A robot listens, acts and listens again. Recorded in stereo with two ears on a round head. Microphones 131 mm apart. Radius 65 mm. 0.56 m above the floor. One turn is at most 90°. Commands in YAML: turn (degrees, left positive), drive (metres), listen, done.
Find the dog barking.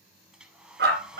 turn: -90
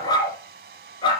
turn: 35
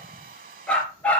turn: 10
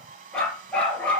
turn: 10
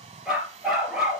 done: "Found it: a dog barking, straight ahead."